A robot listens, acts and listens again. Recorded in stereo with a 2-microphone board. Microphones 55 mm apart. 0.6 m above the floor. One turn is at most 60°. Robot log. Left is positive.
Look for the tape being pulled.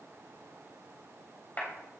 cmd idle
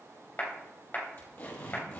note: The tape being pulled: about 45° left or 135° left.
cmd yaw +45
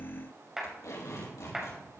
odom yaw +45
note: So it is at 90° left.
cmd yaw +60
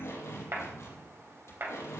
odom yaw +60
note: The tape being pulled is now 55° left.
cmd yaw +55
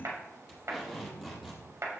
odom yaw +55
note: The tape being pulled is now 10° right.
cmd yaw -10
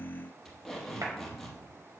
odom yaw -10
end: Facing the tape being pulled, over 4 m away.